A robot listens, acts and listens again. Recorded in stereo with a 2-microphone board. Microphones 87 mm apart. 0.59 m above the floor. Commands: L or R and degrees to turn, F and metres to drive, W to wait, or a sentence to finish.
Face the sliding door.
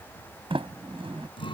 R90
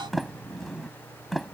Found it: a sliding door, straight ahead.